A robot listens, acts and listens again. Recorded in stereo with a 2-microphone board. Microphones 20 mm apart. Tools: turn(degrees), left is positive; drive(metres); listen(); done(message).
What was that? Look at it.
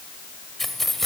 turn(degrees=30)
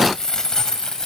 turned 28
turn(degrees=145)
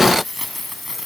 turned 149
done("Found it: keys jangling, straight ahead.")